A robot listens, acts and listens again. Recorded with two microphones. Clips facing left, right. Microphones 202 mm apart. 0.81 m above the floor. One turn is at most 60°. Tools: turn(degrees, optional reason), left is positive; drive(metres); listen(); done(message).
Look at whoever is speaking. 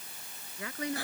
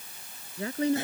turn(degrees=-30, reason="The woman speaking: about 30° right or 150° right.")
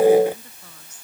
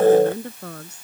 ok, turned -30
turn(degrees=-60, reason="So it is at 115° right.")
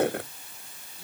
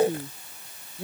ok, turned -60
turn(degrees=-60, reason="The woman speaking is now 60° right.")
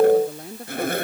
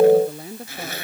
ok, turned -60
done("Found it: a woman speaking, straight ahead.")